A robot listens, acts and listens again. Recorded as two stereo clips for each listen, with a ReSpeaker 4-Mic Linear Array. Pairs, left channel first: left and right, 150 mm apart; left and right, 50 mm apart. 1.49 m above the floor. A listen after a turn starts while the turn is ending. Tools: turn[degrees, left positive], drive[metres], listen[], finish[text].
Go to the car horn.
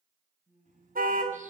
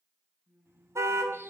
Thought: The car horn: about 75° right or 105° right.
Action: turn[-75]
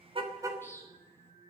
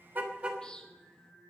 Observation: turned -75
Action: listen[]
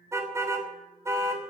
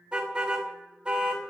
Thought: So it is at 20° right.
Action: turn[-20]
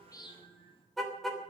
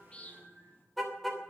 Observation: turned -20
Action: drive[1.0]
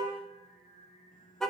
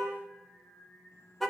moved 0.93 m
Action: drive[1.0]
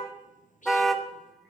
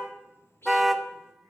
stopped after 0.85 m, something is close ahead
Action: finish[Arrived at the car horn, straight ahead.]